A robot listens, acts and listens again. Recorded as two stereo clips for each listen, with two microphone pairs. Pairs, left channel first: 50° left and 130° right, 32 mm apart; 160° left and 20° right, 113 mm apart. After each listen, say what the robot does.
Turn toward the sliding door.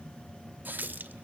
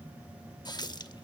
Keep listening.
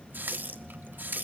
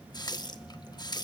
Keep listening.
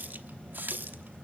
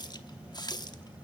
I can't make out a sliding door to turn to.